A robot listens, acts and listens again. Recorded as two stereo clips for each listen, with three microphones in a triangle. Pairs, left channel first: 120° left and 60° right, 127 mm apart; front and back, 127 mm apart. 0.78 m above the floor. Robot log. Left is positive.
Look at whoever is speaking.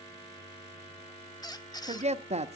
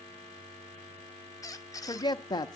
note: The woman speaking: 55° right.
cmd yaw -55
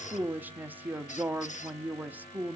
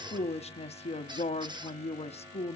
note: The woman speaking is now 15° left.
cmd yaw +15
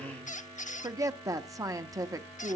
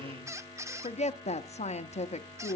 end: Found it: a woman speaking, straight ahead.